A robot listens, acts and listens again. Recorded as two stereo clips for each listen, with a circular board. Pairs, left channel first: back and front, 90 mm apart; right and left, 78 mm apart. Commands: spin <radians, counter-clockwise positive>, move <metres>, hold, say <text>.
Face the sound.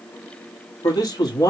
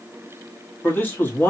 spin -2.53
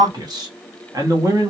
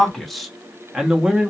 spin 0.35
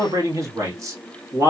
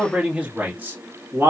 spin 0.79
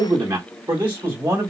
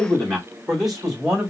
say Facing the man speaking.